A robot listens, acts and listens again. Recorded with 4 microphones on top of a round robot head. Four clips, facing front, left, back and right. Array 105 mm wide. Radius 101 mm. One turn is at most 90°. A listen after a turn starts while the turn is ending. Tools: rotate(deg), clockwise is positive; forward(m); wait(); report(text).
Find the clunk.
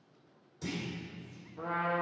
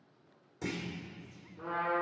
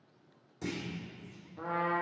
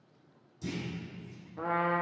rotate(-90)
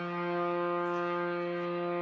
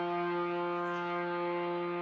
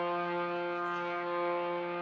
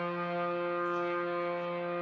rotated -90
rotate(-30)
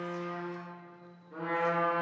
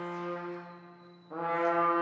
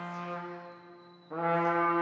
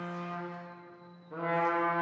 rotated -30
report("I heard a clunk from this way, but can't make it out now.")